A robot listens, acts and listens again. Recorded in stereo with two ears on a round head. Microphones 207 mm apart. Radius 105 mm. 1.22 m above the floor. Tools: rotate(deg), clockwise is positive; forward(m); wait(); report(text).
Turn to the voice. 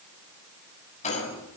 wait()
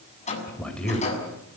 rotate(-30)
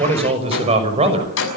rotate(25)
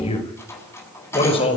rotate(-25)
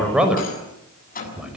report("Found it: a man speaking, straight ahead.")